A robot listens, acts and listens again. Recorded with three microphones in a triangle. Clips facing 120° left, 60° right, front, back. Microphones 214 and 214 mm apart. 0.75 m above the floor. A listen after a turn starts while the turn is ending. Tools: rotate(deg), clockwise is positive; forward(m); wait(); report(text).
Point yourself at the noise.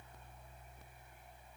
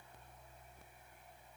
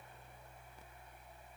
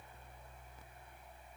wait()
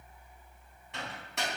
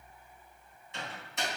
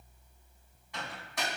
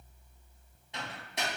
rotate(-115)
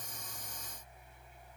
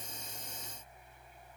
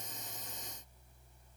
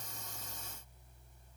wait()
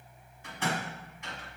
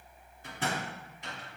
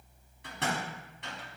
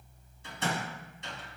rotate(10)
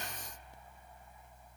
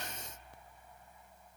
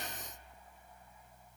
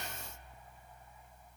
wait()
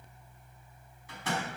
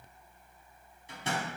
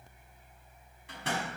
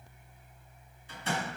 report("Found it: a microwave, straight ahead.")